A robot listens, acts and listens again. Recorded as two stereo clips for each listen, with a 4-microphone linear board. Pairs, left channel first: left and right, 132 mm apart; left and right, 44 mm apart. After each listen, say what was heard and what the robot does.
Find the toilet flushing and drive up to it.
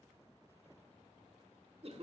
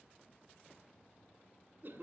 Keep listening.
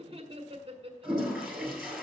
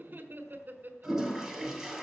Turn 30° left.
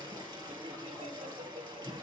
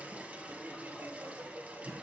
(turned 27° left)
So it is at 30° right. Turn 30° right.
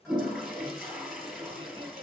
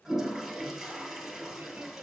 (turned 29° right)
Drive 1.0 m forward.
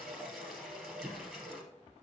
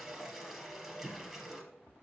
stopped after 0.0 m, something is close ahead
Something is in my way. I am facing the toilet flushing but have not reached it.